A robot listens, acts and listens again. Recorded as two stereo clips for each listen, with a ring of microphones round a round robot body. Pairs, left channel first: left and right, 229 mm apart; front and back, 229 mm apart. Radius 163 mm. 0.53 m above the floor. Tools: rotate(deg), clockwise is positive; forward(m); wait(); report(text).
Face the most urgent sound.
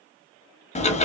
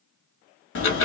wait()
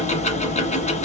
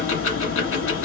wait()
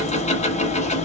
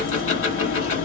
report("I can't make out anything urgent, only ticking.")